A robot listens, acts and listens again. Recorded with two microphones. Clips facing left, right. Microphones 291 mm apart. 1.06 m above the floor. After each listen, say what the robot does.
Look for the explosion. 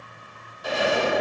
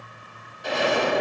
Turn 30° left.
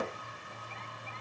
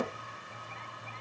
Turn 30° right.
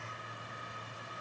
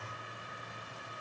I heard an explosion from this way, but can't make it out now.